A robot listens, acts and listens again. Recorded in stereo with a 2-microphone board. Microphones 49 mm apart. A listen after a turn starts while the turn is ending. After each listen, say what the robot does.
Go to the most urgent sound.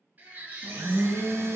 Turn 35° right.
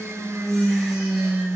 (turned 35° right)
Keep listening.
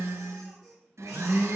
Keep listening.
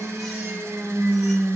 I heard a baby crying, but can't make it out now. It was about straight ahead or 110° right. I did not reach it.